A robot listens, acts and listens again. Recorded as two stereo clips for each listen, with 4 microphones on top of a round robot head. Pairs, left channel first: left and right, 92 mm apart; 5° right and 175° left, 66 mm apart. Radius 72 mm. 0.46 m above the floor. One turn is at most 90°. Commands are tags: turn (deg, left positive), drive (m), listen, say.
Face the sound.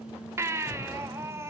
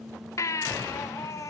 <turn deg="-35"/>
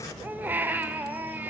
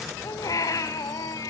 <turn deg="-20"/>
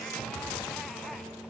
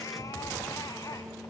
<listen/>
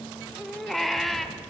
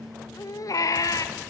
<say>Facing the baby crying.</say>